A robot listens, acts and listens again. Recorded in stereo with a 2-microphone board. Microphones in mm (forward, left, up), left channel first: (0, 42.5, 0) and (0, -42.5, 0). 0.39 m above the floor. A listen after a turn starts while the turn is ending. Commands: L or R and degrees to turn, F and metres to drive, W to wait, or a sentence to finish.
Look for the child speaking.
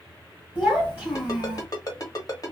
R20
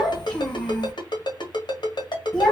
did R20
Found it: a child speaking, straight ahead.